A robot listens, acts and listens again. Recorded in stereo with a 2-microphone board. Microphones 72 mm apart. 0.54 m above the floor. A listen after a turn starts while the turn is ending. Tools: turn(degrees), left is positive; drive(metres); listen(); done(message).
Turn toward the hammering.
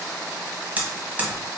turn(degrees=-25)
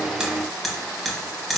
done("Found it: hammering, straight ahead, 1 to 2 m away.")